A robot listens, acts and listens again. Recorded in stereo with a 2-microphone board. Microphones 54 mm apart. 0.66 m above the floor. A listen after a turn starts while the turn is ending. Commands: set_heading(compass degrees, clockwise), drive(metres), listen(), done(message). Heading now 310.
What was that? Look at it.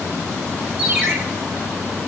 set_heading(340)
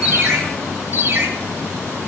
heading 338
set_heading(118)
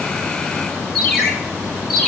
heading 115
done("Facing the ringtone, 2 to 4 m away.")